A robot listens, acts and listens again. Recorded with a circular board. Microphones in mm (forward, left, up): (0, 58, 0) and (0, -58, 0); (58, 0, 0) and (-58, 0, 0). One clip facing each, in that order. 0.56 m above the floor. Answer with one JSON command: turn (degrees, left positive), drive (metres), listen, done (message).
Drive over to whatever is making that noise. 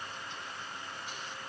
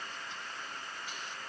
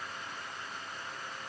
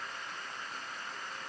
{"listen": true}
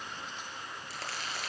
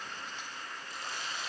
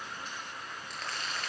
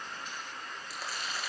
{"turn": 95}
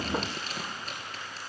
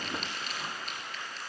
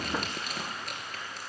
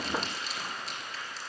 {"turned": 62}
{"turn": 40}
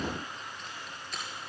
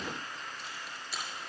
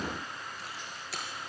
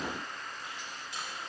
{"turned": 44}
{"drive": 1.0}
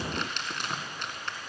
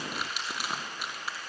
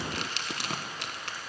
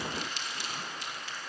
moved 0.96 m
{"turn": -10}
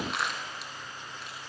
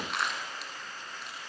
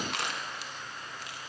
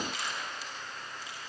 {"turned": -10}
{"drive": 1.0}
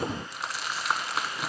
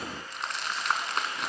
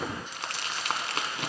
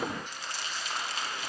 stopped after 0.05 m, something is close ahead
{"done": "Arrived at the crumpling, straight ahead."}